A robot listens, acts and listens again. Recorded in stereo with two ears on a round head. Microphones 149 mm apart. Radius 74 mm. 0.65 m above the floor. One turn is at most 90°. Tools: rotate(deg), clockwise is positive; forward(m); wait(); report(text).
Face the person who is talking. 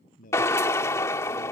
rotate(-50)
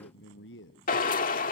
rotate(-80)
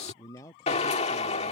rotate(-20)
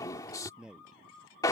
report("Facing the man speaking.")